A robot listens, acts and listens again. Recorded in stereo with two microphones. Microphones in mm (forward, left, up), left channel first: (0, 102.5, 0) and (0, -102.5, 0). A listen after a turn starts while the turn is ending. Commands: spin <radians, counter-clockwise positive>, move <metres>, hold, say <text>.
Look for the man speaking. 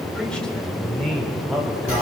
spin 0.52
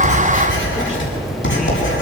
hold
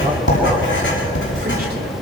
hold
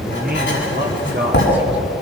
spin -0.96
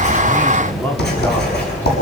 hold
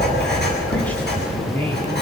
hold
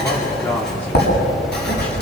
say I heard a man speaking from this way, but can't make it out now.